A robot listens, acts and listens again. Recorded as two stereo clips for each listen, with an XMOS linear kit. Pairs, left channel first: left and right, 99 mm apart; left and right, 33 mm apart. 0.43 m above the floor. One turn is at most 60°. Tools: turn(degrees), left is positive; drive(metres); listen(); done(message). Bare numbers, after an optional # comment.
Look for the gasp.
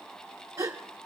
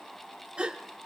# The gasp: about 35° right or 145° right.
turn(-35)
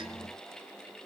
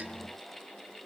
listen()
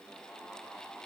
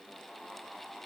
done("I heard a gasp, but can't make it out now. It was about straight ahead or 110° right.")